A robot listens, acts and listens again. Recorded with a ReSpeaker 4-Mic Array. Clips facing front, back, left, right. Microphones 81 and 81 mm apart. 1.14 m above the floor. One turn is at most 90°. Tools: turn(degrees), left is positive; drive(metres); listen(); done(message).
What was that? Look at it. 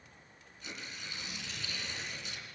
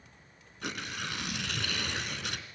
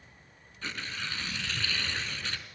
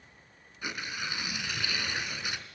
turn(degrees=-90)
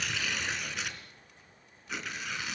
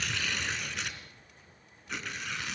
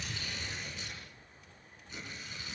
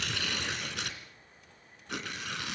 turn(degrees=-90)
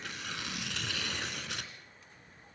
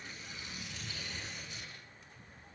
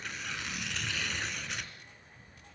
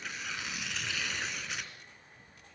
done("Facing the tearing paper, 2 to 4 m away.")